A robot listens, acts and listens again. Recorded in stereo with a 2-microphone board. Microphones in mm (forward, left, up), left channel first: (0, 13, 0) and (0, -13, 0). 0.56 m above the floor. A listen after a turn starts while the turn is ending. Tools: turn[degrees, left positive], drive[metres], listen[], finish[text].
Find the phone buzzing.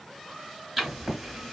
Action: listen[]
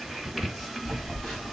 Thought: The phone buzzing: about 35° left or 145° left.
Action: turn[35]
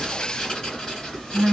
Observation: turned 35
Action: finish[Facing the phone buzzing.]